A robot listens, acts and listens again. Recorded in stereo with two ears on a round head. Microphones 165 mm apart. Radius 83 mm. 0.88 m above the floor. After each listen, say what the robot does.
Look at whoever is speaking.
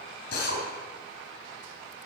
Keep listening.
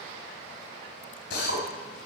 Keep listening.
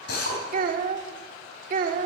Turn 50° right.
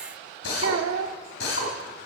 Turn 80° right.
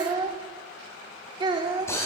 Turn 25° right.
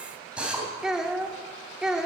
Found it: a child speaking, straight ahead, 1 to 2 m away.